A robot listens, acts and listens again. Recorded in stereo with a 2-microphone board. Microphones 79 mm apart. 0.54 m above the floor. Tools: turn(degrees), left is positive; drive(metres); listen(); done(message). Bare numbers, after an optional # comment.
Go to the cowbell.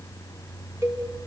# The cowbell: about 30° right or 150° right.
turn(-30)
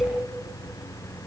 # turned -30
listen()
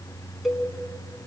drive(1.0)
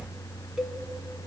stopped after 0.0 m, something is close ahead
done("Blocked. The cowbell is further on, straight ahead.")